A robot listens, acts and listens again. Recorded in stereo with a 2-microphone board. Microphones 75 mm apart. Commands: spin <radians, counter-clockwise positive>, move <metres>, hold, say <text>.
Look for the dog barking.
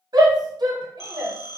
hold
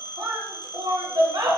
hold
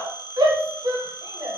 say I can't make out a dog barking, only a shout and a phone ringing.